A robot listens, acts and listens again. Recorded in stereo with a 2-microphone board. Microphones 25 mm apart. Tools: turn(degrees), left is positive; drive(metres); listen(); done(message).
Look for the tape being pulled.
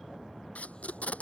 turn(degrees=70)
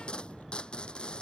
turn(degrees=45)
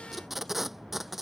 done("Facing the tape being pulled.")